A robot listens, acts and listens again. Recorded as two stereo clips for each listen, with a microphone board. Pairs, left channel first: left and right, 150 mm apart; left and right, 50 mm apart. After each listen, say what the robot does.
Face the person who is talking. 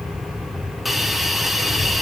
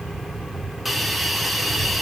Turn 90° left.
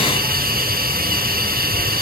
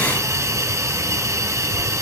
Turn 10° left.
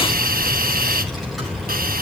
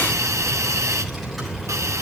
Facing the child speaking.